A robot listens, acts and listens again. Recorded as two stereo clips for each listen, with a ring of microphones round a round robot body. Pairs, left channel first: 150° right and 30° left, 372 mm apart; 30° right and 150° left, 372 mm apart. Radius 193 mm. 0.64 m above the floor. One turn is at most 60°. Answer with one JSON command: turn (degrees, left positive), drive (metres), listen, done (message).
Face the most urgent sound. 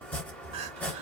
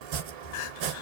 {"turn": -45}
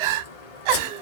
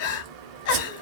{"turn": 20}
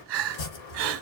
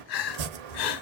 {"done": "Found it: crying, straight ahead, under 1 m away."}